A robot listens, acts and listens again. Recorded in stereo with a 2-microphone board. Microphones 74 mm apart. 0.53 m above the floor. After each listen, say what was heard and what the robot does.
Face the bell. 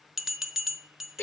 Turn 30° right.
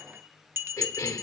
So it is at 145° right. Turn 145° right.
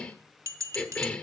The bell is now 45° right. Turn 45° right.
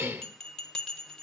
The bell is now 10° left. Turn 10° left.
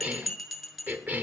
Facing the bell.